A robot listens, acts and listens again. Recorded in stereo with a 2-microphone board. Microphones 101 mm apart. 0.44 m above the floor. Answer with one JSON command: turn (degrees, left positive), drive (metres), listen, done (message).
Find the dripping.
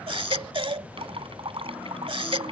{"turn": -65}
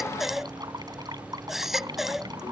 {"turn": -45}
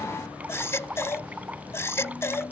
{"turn": -15}
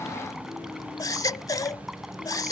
{"listen": true}
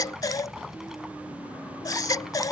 {"listen": true}
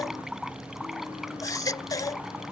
{"done": "Found it: dripping, straight ahead."}